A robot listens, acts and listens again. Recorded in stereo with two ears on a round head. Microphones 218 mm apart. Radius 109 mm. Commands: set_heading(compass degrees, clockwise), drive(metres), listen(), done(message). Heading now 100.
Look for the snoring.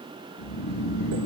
set_heading(35)
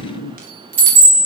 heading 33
done("Facing the snoring.")